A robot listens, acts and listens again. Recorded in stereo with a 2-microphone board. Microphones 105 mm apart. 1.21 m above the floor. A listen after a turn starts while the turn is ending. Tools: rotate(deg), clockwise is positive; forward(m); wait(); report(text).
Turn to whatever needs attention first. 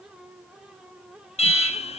rotate(-75)
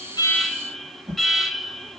report("Facing the alarm, 1 to 2 m away.")